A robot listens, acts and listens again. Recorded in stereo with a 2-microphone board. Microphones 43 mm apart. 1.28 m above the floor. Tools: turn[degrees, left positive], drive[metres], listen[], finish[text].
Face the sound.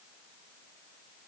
Action: listen[]
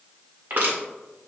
Thought: The crushing: about 55° right or 125° right.
Action: turn[-55]
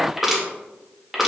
Action: finish[Found it: crushing, straight ahead.]